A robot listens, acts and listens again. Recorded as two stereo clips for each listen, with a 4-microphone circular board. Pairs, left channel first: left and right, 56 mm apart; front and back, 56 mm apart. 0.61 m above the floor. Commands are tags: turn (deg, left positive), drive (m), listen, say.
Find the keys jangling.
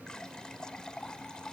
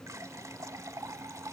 <listen/>
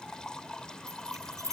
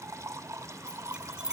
<turn deg="-105"/>
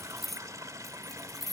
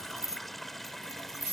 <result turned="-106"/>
<say>Found it: keys jangling, straight ahead.</say>